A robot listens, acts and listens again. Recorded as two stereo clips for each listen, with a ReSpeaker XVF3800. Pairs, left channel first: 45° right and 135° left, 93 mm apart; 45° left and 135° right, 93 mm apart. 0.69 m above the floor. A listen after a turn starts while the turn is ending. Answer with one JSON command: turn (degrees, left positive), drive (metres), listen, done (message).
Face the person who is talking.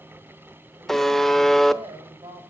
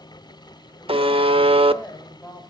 {"turn": 110}
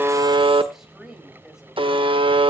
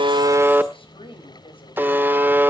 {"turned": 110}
{"turn": 50}
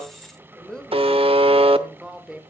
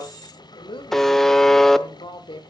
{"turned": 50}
{"turn": 50}
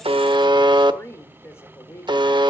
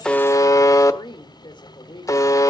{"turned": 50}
{"turn": 15}
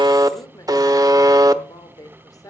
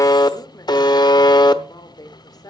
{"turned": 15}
{"done": "Found it: a woman speaking, straight ahead, 2 to 4 m away."}